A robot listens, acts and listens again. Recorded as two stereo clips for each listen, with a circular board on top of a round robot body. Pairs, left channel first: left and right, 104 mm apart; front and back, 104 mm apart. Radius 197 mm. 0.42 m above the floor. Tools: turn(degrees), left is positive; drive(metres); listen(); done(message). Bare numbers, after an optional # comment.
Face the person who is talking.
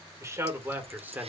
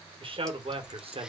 # The man speaking: 160° right.
turn(-160)
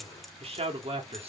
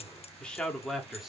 # The man speaking is now 95° right.
turn(-95)
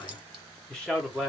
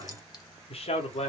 done("Found it: a man speaking, straight ahead.")